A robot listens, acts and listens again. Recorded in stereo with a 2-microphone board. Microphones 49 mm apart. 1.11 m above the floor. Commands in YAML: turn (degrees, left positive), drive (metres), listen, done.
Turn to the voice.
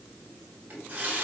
listen: true
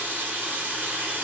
listen: true
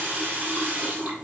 done: "I can't make out anyone speaking to turn to."